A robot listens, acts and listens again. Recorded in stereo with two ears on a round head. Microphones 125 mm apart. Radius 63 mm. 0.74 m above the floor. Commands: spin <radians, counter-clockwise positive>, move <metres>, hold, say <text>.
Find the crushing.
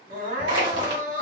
spin -0.61
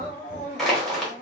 say Facing the crushing.